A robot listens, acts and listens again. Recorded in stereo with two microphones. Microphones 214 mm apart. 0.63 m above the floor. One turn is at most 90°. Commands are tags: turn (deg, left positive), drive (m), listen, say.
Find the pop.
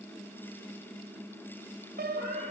<listen/>
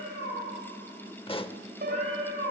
<turn deg="25"/>
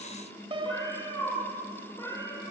<listen/>
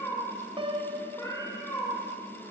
<say>I heard a pop, but can't make it out now. It was about straight ahead or 130° left.</say>